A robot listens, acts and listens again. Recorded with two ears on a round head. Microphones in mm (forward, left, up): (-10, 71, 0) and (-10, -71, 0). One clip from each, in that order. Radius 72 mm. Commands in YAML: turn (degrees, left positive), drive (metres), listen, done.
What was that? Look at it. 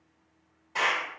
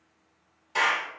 turn: -65
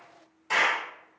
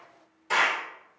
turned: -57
done: "Facing the clap, 1 to 2 m away."